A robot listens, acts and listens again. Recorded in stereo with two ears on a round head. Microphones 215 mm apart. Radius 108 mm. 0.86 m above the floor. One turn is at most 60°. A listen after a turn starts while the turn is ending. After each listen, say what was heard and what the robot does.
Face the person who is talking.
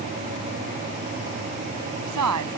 Turn 60° right.
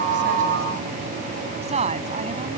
So it is at 25° right. Turn 25° right.
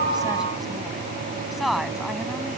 Facing the woman speaking.